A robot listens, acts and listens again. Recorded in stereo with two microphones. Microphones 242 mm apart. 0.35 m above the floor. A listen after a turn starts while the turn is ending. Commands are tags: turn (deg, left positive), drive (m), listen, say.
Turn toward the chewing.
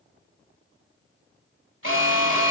<listen/>
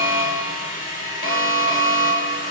<listen/>
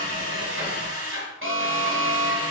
<say>I can't make out chewing, only a drill and an alarm.</say>